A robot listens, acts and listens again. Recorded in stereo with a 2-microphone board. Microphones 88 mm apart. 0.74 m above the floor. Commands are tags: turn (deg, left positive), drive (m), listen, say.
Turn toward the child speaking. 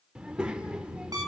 <turn deg="-30"/>
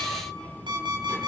<turn deg="15"/>
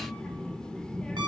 <turn deg="10"/>
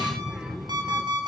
<say>Found it: a child speaking, straight ahead, 1 to 2 m away.</say>